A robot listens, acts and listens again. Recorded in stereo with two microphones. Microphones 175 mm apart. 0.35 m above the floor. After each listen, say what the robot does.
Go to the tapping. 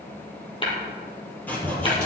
Turn 30° left.
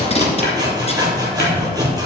Keep listening.
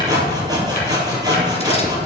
Keep listening.
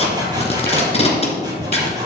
I heard tapping, but can't make it out now. It was about straight ahead or 120° left. I did not reach it.